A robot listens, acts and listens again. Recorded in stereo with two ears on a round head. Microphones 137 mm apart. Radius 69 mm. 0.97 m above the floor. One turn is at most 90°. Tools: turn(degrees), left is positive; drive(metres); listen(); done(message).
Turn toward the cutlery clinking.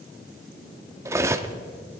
turn(degrees=-20)
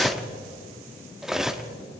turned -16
done("Found it: cutlery clinking, straight ahead, under 1 m away.")